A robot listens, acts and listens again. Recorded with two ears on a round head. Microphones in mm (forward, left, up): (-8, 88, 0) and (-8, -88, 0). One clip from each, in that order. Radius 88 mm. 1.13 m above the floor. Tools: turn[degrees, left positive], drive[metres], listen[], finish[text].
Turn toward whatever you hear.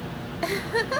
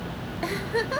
Action: turn[30]
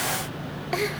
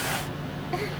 Action: listen[]
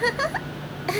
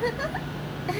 Thought: So it is at 135° left.
Action: turn[135]
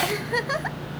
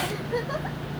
Thought: The giggle is now 50° left.
Action: turn[50]
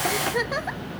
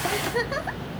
Action: finish[Facing the giggle, under 1 m away.]